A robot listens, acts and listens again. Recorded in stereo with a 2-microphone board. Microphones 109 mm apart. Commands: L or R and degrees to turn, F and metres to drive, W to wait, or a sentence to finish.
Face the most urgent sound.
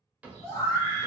L30
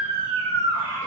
L115
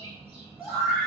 Found it: a scream, straight ahead.